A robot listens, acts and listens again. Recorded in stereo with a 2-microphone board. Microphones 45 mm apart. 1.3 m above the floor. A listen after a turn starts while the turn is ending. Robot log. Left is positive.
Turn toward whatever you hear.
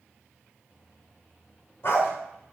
note: The dog barking: about 65° left or 115° left.
cmd yaw +65
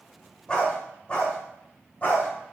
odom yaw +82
note: So it is at 35° left.
cmd yaw +35
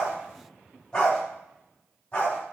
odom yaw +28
note: The dog barking is now 25° left.
cmd yaw +25
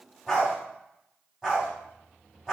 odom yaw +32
note: The dog barking is now 10° right.
cmd yaw -10
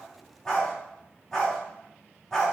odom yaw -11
end: Facing the dog barking, 2 to 4 m away.